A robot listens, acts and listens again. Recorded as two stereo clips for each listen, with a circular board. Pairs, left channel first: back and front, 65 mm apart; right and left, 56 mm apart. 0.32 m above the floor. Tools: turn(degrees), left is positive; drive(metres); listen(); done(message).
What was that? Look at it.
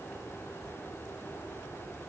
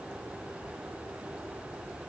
listen()
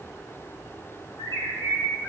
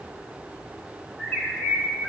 turn(degrees=-150)
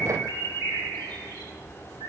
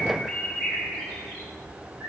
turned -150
done("Facing the bird, 2 to 4 m away.")